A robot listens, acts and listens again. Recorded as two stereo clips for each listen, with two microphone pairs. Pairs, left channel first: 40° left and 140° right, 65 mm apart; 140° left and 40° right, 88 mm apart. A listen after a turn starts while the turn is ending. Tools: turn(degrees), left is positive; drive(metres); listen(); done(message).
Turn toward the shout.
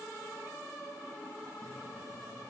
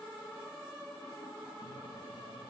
listen()
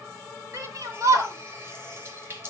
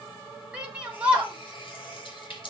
turn(degrees=-115)
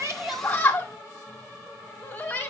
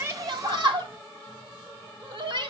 turn(degrees=-25)
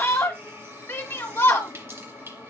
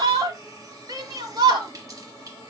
turn(degrees=-10)
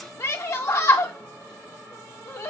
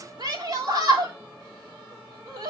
done("Found it: a shout, straight ahead.")